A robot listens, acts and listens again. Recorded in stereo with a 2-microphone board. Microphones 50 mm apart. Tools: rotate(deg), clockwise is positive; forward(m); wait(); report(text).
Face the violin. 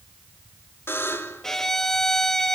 rotate(-30)
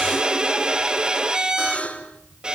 rotate(20)
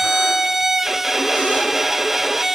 report("Facing the violin, 1 to 2 m away.")